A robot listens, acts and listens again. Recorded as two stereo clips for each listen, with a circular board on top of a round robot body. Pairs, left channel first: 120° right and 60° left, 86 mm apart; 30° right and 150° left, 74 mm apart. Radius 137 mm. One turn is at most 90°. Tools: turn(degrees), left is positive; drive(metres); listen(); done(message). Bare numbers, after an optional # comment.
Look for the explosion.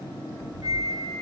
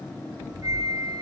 # The explosion: 155° right.
turn(-90)
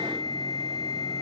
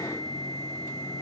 # Nothing new. It was at 65° right.
turn(-65)
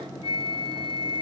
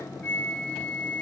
done("I heard an explosion from this way, but can't make it out now.")